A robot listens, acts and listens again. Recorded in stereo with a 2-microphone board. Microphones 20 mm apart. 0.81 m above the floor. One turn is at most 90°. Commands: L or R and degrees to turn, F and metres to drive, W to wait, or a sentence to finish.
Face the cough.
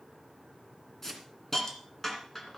W
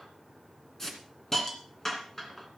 W
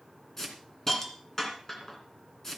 I can't make out a cough, only a hiss.